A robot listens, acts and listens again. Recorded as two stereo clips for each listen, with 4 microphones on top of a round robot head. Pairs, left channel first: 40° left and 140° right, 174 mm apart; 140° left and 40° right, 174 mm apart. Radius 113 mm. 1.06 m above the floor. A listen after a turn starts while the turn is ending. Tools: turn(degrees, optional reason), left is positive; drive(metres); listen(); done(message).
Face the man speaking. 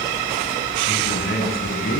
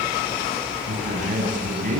done("Facing the man speaking, over 4 m away.")